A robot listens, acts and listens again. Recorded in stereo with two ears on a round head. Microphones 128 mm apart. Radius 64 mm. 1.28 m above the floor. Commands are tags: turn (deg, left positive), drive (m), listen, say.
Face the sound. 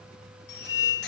<turn deg="90"/>
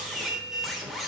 <say>Found it: a squeak, straight ahead.</say>